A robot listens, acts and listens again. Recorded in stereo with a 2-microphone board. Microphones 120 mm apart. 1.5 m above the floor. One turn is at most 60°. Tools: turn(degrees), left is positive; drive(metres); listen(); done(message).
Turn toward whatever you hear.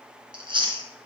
turn(degrees=-45)
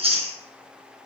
turn(degrees=-60)
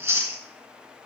turn(degrees=-25)
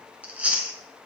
turn(degrees=-15)
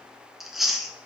done("Found it: chewing, straight ahead.")